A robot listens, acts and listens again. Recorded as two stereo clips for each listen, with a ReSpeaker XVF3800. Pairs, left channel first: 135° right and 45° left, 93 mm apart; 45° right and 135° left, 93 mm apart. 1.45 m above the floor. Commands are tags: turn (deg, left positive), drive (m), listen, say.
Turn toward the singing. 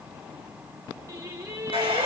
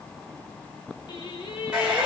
<turn deg="-10"/>
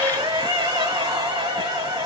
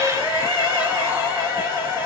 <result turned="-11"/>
<say>Facing the singing, 1 to 2 m away.</say>